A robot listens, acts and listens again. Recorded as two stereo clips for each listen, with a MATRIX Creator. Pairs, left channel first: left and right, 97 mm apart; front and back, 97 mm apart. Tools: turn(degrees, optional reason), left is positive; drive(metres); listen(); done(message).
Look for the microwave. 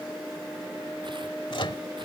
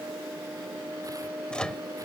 turn(degrees=80, reason="The microwave: 80° left.")
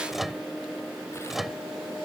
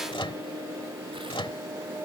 done("Facing the microwave.")